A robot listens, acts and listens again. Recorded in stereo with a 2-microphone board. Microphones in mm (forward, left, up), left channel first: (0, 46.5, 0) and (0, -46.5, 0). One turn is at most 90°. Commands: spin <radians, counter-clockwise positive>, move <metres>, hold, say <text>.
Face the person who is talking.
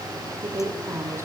spin -0.52
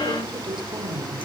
spin -1.57
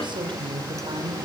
spin -1.05
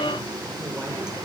hold
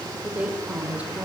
spin -0.26
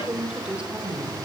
spin -0.17
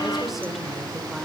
hold
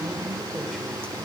hold
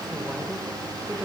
say Facing where the woman speaking came from. I can't hear it now.